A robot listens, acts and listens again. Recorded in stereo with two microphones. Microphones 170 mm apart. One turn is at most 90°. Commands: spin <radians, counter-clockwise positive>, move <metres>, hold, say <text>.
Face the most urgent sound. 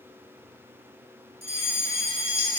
spin 1.31
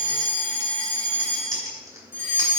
spin 0.26
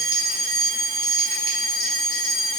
say Found it: a fire alarm, straight ahead.